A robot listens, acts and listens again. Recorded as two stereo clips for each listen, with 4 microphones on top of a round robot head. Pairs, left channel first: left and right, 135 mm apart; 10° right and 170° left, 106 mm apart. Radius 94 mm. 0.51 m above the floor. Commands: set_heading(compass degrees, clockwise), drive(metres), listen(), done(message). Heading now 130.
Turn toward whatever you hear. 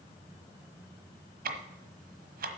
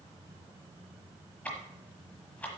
set_heading(220)
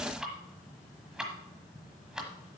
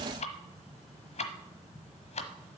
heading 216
done("Facing the ticking, 1 to 2 m away.")